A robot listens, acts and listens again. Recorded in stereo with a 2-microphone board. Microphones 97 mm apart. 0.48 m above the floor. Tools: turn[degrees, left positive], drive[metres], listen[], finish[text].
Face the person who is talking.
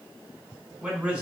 Action: turn[-30]
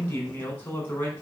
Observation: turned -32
Thought: So it is at 20° left.
Action: turn[20]
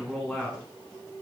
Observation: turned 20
Action: finish[Facing the man speaking, over 4 m away.]